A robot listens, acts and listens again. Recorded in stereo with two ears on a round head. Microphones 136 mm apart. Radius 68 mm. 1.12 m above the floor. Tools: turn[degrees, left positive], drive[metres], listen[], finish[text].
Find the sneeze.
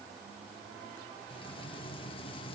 Action: listen[]
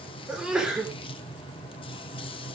Action: turn[-30]
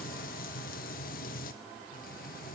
Action: listen[]
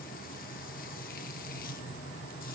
Action: finish[I heard a sneeze, but can't make it out now. It was about 25° left or 145° right.]